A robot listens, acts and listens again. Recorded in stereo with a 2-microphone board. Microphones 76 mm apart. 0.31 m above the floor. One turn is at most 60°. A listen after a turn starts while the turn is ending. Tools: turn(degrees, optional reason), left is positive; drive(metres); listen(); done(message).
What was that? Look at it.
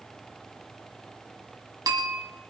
turn(degrees=-55, reason="The bell: about 55° right or 125° right.")
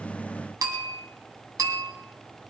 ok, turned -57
turn(degrees=-60, reason="So it is at 60° right.")
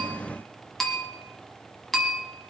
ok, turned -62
done("Found it: a bell, straight ahead.")